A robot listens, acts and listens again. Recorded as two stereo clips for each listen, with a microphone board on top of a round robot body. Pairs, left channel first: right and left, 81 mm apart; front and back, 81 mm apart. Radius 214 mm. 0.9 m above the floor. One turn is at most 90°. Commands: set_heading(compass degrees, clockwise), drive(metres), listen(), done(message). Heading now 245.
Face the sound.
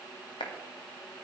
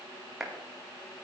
set_heading(335)
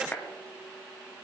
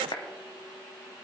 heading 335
set_heading(350)
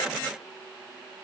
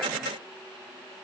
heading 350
listen()
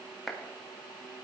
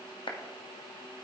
done("Found it: a clap, straight ahead, 2 to 4 m away.")